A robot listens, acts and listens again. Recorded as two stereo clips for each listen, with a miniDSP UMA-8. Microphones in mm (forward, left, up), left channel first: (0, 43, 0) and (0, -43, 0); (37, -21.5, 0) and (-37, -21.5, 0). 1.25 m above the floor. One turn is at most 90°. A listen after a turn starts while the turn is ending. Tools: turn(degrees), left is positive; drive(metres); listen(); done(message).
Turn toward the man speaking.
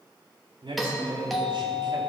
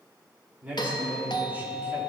turn(degrees=-90)
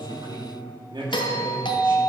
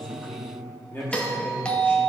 turn(degrees=-70)
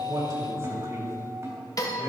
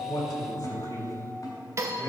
turn(degrees=-40)
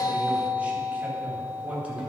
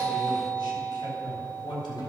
turn(degrees=-15)
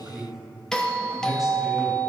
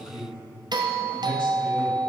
done("Facing the man speaking, 2 to 4 m away.")